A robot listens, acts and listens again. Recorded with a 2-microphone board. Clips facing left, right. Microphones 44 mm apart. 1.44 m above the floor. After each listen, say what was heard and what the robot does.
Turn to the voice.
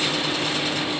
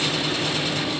Keep listening.
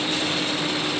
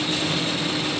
Keep listening.
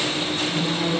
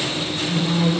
The woman speaking: about 30° right or 150° right. Turn 30° right.
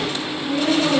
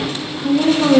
So it is at 125° right. Turn 125° right.
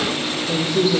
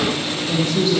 The woman speaking is now 20° left. Turn 20° left.
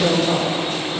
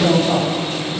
Found it: a woman speaking, straight ahead, 2 to 4 m away.